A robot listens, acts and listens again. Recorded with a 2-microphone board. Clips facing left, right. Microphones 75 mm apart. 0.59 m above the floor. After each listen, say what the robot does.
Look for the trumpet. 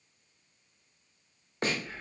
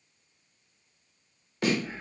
Keep listening.
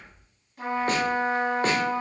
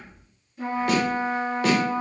Turn 60° left.
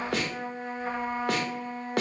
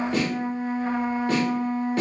Found it: a trumpet, straight ahead.